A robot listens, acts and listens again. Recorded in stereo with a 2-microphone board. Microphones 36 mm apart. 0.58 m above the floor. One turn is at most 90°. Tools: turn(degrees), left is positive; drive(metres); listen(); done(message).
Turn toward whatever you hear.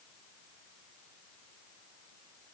listen()
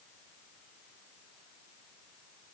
listen()
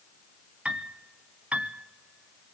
turn(degrees=-35)
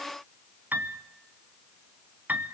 turn(degrees=-90)
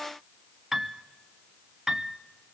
turn(degrees=-15)
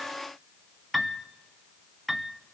done("Found it: a piano, straight ahead, under 1 m away.")